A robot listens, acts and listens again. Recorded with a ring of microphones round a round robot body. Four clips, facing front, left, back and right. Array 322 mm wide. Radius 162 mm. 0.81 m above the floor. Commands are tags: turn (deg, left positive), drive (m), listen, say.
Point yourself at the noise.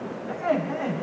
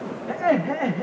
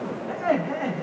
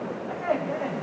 <turn deg="95"/>
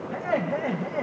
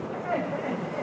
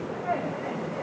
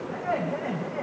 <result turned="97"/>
<say>Found it: laughter, straight ahead.</say>